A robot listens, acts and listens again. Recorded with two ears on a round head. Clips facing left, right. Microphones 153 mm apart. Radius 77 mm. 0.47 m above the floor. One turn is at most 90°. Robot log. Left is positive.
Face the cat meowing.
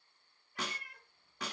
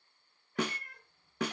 cmd yaw +30
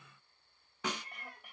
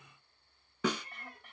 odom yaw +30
note: So it is at 20° right.
cmd yaw -20
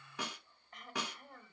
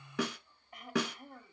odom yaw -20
cmd idle
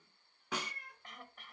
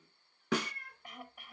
note: The cat meowing is now 15° left.
cmd yaw +15
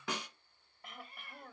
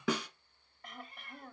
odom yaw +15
end: Found it: a cat meowing, straight ahead.